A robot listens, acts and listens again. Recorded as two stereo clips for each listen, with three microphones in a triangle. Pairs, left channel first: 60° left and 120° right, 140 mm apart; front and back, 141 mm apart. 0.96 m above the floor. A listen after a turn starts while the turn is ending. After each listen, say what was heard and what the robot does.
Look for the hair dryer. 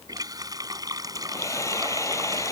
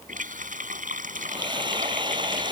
The hair dryer: 125° left. Turn 125° left.
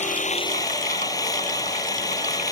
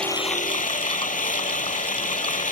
Facing the hair dryer.